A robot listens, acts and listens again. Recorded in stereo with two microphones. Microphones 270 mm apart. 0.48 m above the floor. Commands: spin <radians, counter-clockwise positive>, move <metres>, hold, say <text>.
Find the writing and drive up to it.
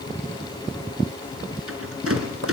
hold
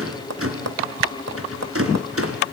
hold
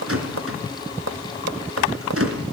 say I can't make out writing, only a rattle and tapping.